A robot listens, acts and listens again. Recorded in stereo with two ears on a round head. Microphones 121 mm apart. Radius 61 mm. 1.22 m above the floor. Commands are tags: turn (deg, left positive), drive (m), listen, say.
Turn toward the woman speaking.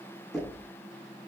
<listen/>
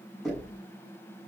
<listen/>
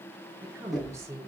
<turn deg="-20"/>
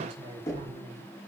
<turn deg="-140"/>
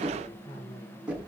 <turn deg="30"/>
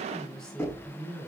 <say>Found it: a woman speaking, straight ahead, over 4 m away.</say>